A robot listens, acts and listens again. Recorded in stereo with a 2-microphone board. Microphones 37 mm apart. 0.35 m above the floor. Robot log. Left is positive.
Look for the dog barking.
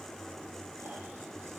cmd idle
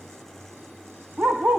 note: The dog barking: about 50° right or 130° right.
cmd yaw -50
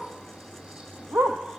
note: So it is at 80° right.
cmd yaw -80
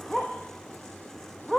note: The dog barking is now 10° left.
cmd yaw +10
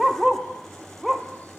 end: Facing the dog barking, 2 to 4 m away.